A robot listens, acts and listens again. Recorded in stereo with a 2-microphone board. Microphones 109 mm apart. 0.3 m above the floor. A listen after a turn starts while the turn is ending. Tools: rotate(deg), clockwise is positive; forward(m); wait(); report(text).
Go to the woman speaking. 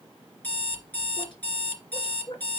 rotate(-50)
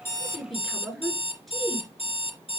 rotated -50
forward(1.0)
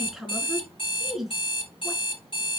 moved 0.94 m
forward(1.0)
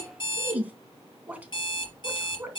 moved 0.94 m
rotate(15)
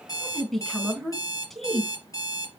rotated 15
forward(1.0)
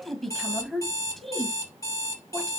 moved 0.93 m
forward(1.0)
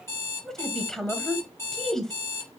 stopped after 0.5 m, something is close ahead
report("Arrived at the woman speaking, straight ahead.")